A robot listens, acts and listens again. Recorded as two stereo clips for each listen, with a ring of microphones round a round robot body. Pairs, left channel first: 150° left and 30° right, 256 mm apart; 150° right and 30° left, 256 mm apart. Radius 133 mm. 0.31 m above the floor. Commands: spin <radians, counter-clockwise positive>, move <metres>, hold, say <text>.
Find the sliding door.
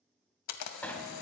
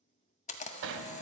spin 1.13
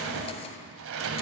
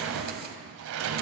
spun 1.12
say Facing the sliding door, 1 to 2 m away.